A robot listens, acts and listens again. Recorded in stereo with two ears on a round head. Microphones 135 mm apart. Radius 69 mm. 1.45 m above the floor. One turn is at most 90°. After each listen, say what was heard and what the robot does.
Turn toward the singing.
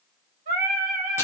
The singing: about 50° right or 130° right. Turn 50° right.
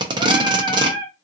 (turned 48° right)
Found it: singing, straight ahead, 1 to 2 m away.